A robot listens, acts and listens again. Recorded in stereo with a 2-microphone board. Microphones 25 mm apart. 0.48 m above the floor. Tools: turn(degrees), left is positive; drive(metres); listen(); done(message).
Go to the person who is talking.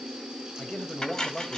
turn(degrees=60)
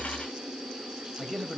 turn(degrees=15)
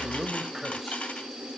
listen()
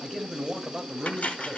drive(metres=1.0)
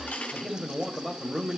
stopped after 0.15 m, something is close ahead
done("Blocked. The man speaking is further on, straight ahead.")